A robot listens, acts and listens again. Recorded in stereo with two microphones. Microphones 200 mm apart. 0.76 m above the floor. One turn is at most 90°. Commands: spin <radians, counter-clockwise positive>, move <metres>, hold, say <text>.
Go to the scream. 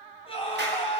spin 0.44
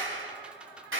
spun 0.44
hold
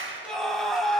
move 1.0
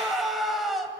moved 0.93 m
move 1.0
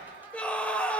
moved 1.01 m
move 1.0
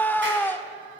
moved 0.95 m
spin 0.17
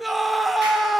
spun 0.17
move 1.0
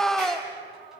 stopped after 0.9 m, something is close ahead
say Arrived at the scream, straight ahead.